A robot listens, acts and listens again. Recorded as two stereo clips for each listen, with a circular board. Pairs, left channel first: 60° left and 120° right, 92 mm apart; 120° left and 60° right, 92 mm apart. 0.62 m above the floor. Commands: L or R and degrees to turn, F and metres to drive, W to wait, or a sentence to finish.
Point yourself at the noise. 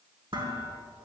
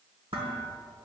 R85
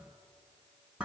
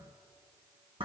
R40
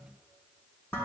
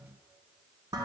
R10
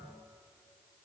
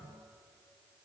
W
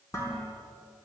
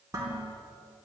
Found it: dishes clattering, straight ahead, over 4 m away.